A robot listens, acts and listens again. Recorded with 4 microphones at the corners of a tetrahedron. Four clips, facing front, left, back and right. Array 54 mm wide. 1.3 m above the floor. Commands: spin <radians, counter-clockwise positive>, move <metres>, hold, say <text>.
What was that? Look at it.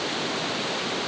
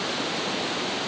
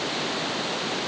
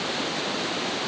hold
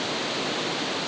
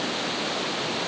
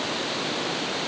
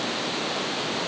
hold
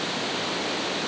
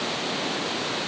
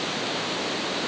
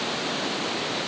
say I can't make out anything.